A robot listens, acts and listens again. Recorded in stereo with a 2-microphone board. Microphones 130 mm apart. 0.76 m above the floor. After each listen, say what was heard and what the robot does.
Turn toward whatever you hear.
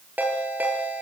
Turn 30° right.
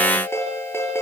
So it is at 20° left. Turn 20° left.
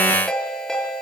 Facing the ringtone.